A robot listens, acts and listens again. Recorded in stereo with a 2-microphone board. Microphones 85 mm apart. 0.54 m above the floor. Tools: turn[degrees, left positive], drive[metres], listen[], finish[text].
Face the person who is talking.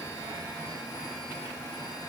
Action: listen[]
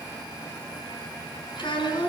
Thought: The child speaking: about 65° left or 115° left.
Action: turn[65]
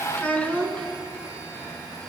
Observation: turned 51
Thought: So it is at 15° left.
Action: turn[15]
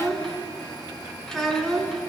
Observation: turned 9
Action: finish[Facing the child speaking, over 4 m away.]